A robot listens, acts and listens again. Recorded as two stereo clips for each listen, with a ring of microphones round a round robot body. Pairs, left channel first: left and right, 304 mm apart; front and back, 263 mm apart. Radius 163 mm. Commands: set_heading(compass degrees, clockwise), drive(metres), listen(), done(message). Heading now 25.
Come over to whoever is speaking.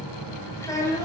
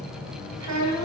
set_heading(215)
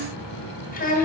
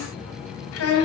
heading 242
set_heading(217)
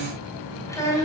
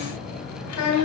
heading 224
set_heading(214)
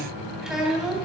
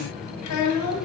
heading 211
drive(1.0)
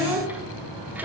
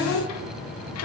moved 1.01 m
drive(1.0)
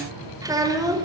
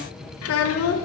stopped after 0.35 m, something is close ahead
set_heading(226)
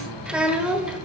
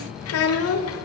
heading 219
done("I am next to the child speaking.")